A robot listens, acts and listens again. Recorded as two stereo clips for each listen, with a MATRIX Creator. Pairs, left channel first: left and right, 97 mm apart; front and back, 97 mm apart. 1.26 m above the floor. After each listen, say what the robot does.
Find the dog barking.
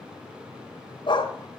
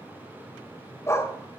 Turn 55° left.
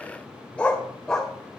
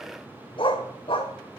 Facing the dog barking, 1 to 2 m away.